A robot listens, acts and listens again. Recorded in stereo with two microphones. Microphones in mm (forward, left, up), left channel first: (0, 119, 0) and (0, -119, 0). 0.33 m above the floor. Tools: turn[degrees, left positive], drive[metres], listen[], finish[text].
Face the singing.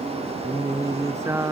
Action: turn[-30]
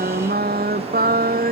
Thought: So it is at 140° right.
Action: turn[-140]
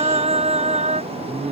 Thought: The singing is now 30° right.
Action: turn[-30]
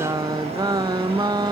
Thought: The singing is now 15° right.
Action: turn[-15]
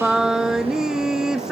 Action: finish[Found it: singing, straight ahead.]